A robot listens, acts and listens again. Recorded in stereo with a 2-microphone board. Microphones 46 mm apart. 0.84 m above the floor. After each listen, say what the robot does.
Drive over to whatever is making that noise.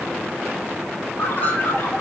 Turn 40° left.
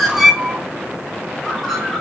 Drive 1.0 m forward.
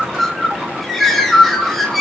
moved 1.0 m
Drive 1.0 m forward.
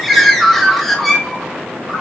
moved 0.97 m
Drive 1.0 m forward.
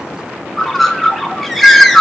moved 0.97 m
Drive 1.0 m forward.
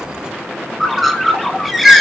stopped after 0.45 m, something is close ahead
Arrived at the bird, straight ahead.